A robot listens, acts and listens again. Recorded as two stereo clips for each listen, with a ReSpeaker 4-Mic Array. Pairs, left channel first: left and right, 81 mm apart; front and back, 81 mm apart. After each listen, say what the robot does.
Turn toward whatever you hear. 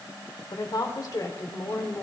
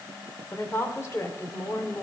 Turn 45° left.
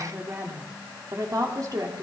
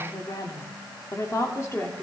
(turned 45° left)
Turn 55° right.
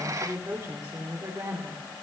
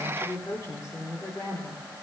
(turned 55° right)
Turn 55° right.
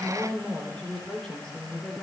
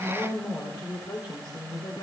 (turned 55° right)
Turn 10° left.
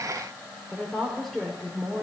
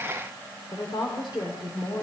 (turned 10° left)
Found it: a woman speaking, straight ahead.